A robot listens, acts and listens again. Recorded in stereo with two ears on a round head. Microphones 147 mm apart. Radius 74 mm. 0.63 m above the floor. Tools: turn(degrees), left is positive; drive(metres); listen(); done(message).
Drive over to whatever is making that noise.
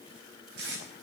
turn(degrees=-90)
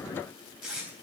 drive(metres=1.0)
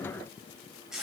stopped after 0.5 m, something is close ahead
done("Blocked. The tape being pulled is further on, straight ahead.")